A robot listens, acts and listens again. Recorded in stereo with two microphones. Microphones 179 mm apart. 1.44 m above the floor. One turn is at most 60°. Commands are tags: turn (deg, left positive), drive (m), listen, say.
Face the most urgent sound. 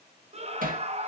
<turn deg="-35"/>
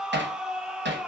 <say>Found it: a scream, straight ahead.</say>